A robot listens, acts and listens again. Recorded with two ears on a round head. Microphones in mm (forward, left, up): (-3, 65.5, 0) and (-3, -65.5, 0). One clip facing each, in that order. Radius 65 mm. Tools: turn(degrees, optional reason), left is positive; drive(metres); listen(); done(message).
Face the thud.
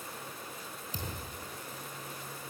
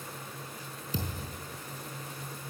turn(degrees=-65, reason="The thud: about 65° right or 115° right.")
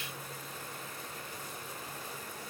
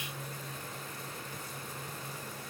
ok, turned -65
listen()
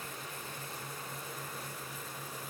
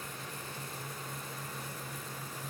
done("I heard a thud, but can't make it out now. It was about straight ahead or 50° right.")